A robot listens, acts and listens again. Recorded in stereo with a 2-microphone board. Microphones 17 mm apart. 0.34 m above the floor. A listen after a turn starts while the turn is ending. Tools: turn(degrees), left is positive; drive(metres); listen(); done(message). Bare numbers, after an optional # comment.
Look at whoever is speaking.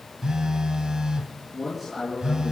turn(-30)
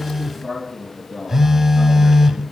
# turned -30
# So it is at 145° right.
turn(-145)
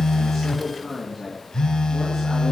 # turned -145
done("Found it: a man speaking, straight ahead, over 4 m away.")